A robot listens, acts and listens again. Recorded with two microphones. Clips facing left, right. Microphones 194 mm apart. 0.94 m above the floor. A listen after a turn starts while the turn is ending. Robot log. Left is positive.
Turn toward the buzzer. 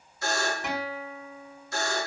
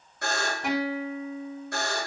note: The buzzer: about 65° right or 115° right.
cmd yaw -65
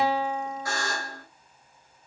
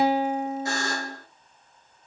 note: So it is at 25° right.
cmd yaw -25
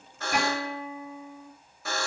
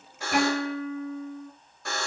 end: Found it: a buzzer, straight ahead, under 1 m away.